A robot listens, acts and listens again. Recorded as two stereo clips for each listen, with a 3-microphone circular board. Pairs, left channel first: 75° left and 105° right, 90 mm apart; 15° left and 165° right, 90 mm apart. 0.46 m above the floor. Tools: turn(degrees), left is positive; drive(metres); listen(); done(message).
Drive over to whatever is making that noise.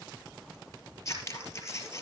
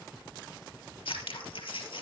turn(degrees=20)
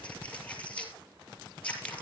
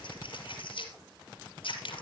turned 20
drive(metres=1.0)
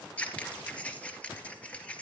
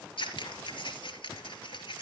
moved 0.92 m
drive(metres=1.0)
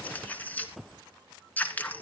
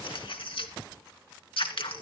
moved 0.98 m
drive(metres=1.0)
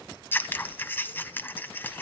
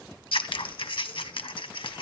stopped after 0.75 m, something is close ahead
turn(degrees=10)
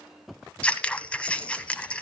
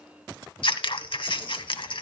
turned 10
done("Arrived at the scissors, straight ahead.")